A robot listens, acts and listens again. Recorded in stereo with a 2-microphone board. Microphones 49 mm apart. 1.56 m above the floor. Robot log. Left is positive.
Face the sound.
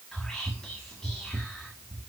note: The whispering: about 15° left or 165° left.
cmd yaw +15
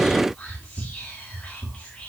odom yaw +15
note: So it is at 150° left.
cmd yaw +150
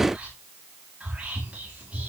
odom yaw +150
note: The whispering is now 30° right.
cmd yaw -30
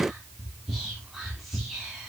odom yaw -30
end: Facing the whispering.